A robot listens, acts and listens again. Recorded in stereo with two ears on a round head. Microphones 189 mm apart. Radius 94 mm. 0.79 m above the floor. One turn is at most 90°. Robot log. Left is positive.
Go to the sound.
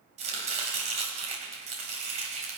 note: The chopping: about 35° right or 145° right.
cmd yaw -35
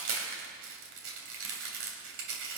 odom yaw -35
note: So it is at 110° right.
cmd yaw -90
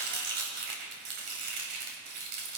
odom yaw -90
note: The chopping is now 55° right.
cmd yaw -55
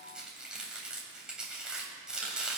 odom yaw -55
cmd fwd 1.0
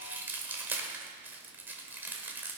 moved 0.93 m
note: The chopping is now 10° right.
cmd yaw -10
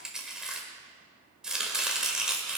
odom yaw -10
cmd fwd 1.0
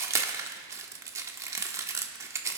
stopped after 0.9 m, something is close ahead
note: The chopping is now 15° right.
cmd yaw -15
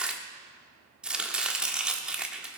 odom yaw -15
end: I am next to the chopping.